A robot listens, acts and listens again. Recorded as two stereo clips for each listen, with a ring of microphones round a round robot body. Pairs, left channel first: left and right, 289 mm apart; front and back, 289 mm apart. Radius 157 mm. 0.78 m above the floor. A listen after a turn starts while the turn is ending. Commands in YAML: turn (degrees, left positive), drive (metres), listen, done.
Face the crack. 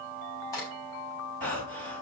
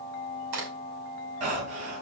turn: 170
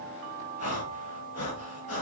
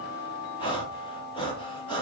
done: "Facing where the crack came from. I can't hear it now."